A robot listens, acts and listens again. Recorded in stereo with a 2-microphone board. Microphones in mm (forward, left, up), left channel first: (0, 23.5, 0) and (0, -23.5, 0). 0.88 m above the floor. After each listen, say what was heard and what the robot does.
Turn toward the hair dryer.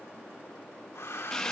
The hair dryer: about 75° left or 105° left. Turn 75° left.
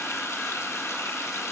Keep listening.
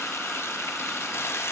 Keep listening.
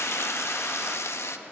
I heard a hair dryer, but can't make it out now. It was about straight ahead or 30° left.